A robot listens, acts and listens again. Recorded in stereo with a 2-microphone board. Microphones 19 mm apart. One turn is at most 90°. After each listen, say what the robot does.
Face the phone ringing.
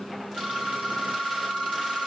Turn 90° right.
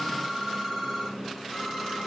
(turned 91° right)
Turn 10° right.
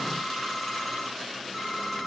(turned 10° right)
Found it: a phone ringing, straight ahead.